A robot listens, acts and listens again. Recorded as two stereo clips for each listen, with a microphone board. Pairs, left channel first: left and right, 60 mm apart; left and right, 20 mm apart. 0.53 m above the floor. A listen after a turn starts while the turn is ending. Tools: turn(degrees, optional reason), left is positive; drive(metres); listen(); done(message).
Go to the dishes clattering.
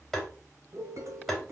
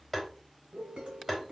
turn(degrees=-60, reason="The dishes clattering: about 60° right or 120° right.")
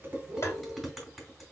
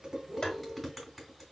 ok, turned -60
drive(metres=1.0)
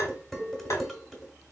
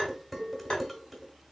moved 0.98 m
drive(metres=1.0)
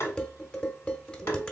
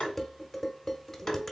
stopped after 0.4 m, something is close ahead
turn(degrees=15, reason="The dishes clattering is now 15° left.")
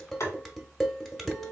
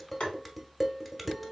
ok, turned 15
done("Arrived at the dishes clattering, straight ahead.")